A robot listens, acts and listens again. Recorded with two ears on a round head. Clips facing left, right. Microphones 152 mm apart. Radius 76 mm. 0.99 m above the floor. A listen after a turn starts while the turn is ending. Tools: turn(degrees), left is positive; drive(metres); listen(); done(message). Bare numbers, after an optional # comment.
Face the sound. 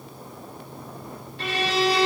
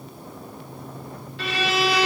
# The violin: about 60° right or 120° right.
turn(-60)
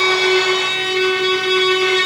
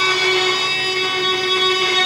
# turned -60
# So it is at 40° right.
turn(-40)
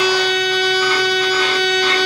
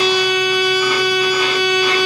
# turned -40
# The violin is now 10° right.
turn(-10)
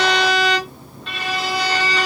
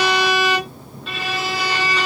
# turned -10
done("Facing the violin, 1 to 2 m away.")